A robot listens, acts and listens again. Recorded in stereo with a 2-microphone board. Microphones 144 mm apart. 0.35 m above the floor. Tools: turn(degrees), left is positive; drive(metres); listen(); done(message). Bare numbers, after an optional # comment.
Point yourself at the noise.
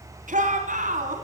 # The shout: about 70° right or 110° right.
turn(-70)
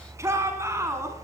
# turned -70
# So it is at 20° right.
turn(-20)
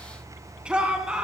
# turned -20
# The shout is now 10° right.
turn(-10)
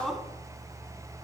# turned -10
done("Facing the shout.")